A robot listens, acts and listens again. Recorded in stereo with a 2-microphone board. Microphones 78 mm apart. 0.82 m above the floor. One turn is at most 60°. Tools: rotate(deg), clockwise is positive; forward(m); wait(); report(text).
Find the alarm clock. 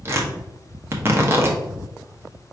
wait()
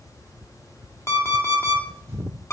rotate(-35)
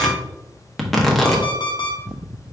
rotate(-60)
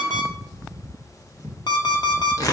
rotate(-60)
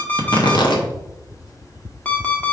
rotate(-20)
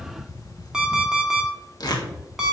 rotate(10)
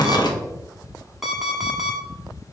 report("Facing the alarm clock, 1 to 2 m away.")